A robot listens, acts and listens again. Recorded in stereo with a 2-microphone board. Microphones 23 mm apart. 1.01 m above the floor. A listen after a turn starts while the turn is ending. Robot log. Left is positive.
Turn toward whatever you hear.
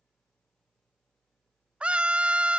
note: The scream: about 55° right or 125° right.
cmd yaw -55
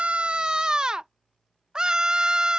note: So it is at 40° right.
cmd yaw -40
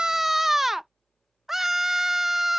note: The scream is now 15° right.
cmd yaw -15
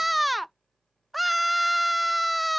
end: Found it: a scream, straight ahead.